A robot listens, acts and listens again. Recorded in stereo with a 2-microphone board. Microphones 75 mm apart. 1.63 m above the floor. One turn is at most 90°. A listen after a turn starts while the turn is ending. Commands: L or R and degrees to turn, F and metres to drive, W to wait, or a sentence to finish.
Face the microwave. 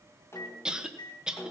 L90
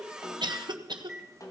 R10
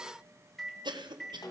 Found it: a microwave, straight ahead.